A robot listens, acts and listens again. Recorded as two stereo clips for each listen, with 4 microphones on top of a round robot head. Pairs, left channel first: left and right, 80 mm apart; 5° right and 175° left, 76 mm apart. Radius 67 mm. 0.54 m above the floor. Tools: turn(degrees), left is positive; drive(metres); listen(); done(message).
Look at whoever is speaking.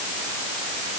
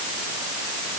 listen()
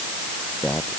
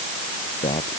done("Facing the man speaking.")